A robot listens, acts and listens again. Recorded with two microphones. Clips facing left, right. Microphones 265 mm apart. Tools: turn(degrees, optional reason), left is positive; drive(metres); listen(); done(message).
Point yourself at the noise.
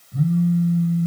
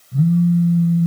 turn(degrees=-40, reason="The phone buzzing: about 40° right or 140° right.")
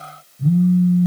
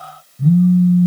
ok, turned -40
turn(degrees=-100, reason="So it is at 100° right.")
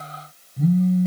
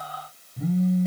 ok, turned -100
done("Facing the phone buzzing, 1 to 2 m away.")